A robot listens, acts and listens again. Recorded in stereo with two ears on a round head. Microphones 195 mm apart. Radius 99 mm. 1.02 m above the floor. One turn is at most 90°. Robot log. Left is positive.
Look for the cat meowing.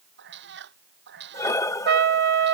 note: The cat meowing: about 55° right or 125° right.
cmd yaw -55
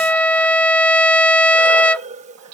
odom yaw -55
note: So it is at 75° right.
cmd yaw -75
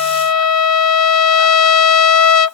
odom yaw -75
cmd idle
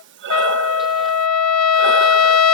cmd idle
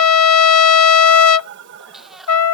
end: Found it: a cat meowing, straight ahead.